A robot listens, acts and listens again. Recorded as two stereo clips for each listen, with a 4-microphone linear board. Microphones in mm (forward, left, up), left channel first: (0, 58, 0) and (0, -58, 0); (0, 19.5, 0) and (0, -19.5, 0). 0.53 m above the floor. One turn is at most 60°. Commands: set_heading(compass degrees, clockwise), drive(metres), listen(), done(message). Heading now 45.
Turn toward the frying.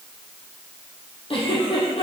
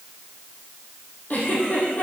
listen()
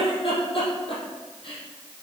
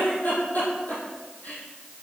listen()
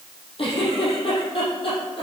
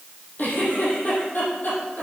done("I can't make out frying to turn to.")